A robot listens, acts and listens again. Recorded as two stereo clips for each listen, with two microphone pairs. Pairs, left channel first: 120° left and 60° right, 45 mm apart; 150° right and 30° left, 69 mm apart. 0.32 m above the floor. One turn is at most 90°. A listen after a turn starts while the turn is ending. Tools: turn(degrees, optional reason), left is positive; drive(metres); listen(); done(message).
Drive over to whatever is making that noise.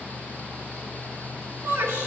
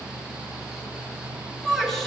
turn(degrees=-60, reason="The shout: 60° right.")
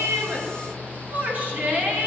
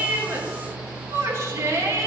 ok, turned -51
turn(degrees=-10, reason="The shout is now 10° right.")
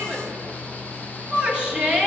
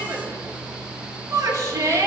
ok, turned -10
drive(metres=1.0)
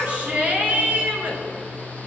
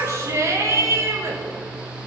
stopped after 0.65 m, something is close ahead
done("Blocked. The shout is further on, straight ahead.")